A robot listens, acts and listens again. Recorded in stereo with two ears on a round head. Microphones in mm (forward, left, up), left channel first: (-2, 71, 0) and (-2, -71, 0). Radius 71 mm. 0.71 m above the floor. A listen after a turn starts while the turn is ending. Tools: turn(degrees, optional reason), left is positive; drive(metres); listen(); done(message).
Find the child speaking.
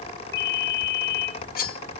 listen()
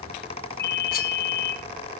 listen()
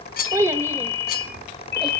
turn(degrees=-15, reason="The child speaking: about 15° right or 165° right.")
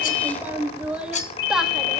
turn(degrees=-30)
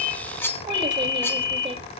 listen()
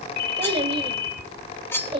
turn(degrees=-145, reason="So it is at 145° right.")
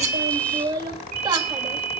turn(degrees=-25, reason="The child speaking is now 25° right.")
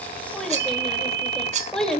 done("Found it: a child speaking, straight ahead, 2 to 4 m away.")